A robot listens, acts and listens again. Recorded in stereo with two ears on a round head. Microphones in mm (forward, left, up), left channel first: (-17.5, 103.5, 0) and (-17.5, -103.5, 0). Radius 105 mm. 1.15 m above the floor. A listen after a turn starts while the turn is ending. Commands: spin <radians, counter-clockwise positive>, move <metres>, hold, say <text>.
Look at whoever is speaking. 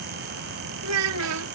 spin -1.22
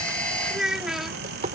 say Facing the child speaking.